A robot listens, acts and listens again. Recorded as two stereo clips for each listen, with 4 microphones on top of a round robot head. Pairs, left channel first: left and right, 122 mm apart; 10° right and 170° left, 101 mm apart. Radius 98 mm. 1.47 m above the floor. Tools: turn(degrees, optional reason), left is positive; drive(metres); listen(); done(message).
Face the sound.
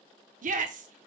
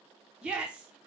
turn(degrees=-105, reason="The shout: 105° right.")
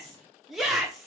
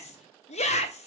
done("Found it: a shout, straight ahead.")